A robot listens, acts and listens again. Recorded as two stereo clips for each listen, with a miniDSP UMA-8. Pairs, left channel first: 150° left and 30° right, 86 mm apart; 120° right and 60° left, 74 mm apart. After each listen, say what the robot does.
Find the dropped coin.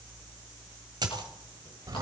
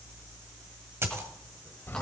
Facing the dropped coin.